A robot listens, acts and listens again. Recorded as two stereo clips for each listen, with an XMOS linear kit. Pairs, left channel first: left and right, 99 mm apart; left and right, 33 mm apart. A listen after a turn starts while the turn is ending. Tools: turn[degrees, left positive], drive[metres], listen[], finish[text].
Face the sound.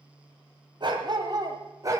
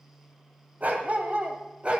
Thought: The dog barking: about 30° right or 150° right.
Action: turn[-30]
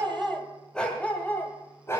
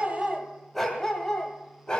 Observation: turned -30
Thought: So it is at 30° left.
Action: turn[30]
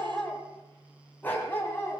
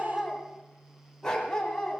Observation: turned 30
Thought: The dog barking is now 25° left.
Action: turn[25]
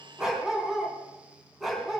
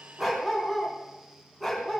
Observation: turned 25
Action: finish[Facing the dog barking, 2 to 4 m away.]